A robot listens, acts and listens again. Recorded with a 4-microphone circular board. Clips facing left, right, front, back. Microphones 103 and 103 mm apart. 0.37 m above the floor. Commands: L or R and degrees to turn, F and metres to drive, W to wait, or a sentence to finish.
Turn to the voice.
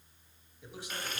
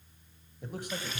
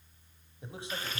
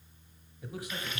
R60
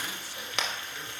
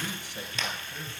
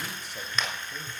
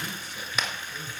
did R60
W
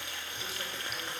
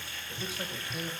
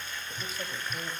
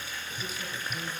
W
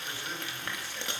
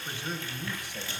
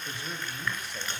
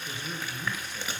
R20
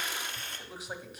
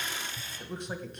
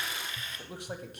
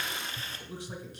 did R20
Facing the man speaking, 1 to 2 m away.